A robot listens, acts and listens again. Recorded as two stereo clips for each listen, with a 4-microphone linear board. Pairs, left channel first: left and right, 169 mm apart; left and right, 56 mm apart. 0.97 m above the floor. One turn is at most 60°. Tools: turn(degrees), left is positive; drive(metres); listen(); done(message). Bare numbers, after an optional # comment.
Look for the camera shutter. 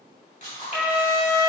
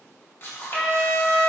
# The camera shutter: about 45° left or 135° left.
turn(45)
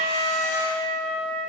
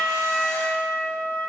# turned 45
listen()
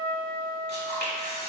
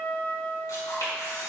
# So it is at 90° left.
turn(60)
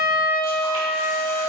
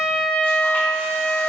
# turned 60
# Nothing new. It was at 30° left.
turn(30)
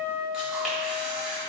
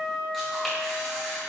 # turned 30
done("Found it: a camera shutter, straight ahead.")